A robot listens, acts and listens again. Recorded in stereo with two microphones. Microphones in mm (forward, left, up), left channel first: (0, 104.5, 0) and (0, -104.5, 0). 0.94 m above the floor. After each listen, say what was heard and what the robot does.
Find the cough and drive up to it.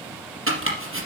Keep listening.
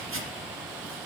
Keep listening.
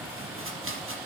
I can't make out a cough, only chopping.